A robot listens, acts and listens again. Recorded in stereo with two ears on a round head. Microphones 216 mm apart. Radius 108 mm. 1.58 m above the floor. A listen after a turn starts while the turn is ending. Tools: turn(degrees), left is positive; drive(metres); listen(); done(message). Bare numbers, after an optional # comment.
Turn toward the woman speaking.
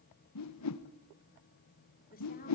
# The woman speaking: about 40° left or 140° left.
turn(40)
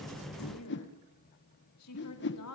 # So it is at 105° left.
turn(105)
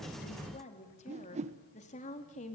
# The woman speaking is now 30° left.
turn(30)
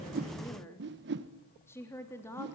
# The woman speaking is now 10° left.
turn(10)
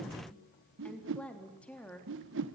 done("Facing the woman speaking, 2 to 4 m away.")